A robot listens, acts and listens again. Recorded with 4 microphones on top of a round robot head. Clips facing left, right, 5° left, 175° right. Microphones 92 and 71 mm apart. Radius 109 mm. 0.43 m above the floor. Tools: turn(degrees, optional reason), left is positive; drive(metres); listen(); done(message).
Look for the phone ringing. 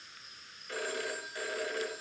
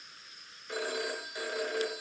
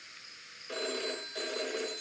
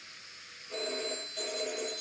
turn(degrees=-15, reason="The phone ringing: 15° right.")
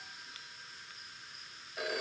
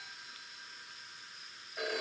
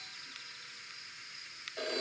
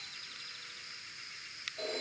done("Facing the phone ringing, 2 to 4 m away.")